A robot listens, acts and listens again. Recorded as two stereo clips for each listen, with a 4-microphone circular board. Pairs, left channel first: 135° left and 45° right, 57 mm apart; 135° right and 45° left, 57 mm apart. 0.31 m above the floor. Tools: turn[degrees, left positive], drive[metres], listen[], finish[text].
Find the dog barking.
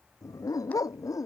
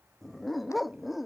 Thought: The dog barking: 135° left.
Action: turn[135]
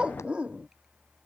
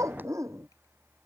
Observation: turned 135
Thought: The dog barking is now 25° left.
Action: turn[25]
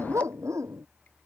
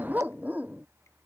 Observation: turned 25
Thought: The dog barking is now 15° right.
Action: turn[-15]
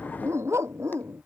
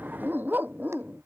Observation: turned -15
Thought: The dog barking is now 10° right.
Action: turn[-10]
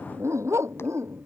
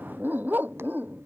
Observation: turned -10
Thought: The dog barking is now 10° right.
Action: turn[-10]
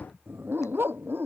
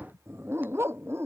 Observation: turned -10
Action: finish[Facing the dog barking.]